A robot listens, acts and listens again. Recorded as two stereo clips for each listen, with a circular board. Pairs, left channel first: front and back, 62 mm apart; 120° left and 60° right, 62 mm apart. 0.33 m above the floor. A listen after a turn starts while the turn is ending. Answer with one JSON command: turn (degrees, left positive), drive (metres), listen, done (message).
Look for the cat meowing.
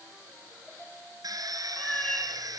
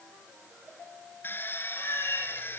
{"turn": 80}
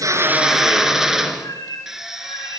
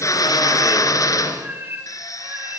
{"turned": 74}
{"done": "Facing the cat meowing, over 4 m away."}